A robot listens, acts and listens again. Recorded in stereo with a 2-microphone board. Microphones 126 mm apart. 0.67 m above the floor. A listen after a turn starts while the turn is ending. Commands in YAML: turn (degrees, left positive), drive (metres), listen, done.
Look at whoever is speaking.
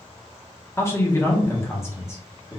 turn: 20
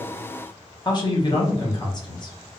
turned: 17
turn: 145
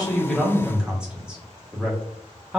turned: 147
turn: -10
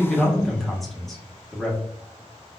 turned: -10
done: "Found it: a man speaking, straight ahead, 1 to 2 m away."